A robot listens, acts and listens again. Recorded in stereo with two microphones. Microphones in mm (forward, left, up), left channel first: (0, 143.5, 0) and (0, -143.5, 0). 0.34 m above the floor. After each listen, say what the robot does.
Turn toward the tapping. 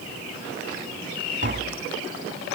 Turn 40° right.
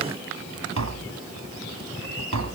Turn 100° right.
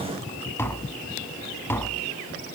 Turn 10° left.
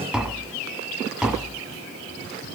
Facing the tapping.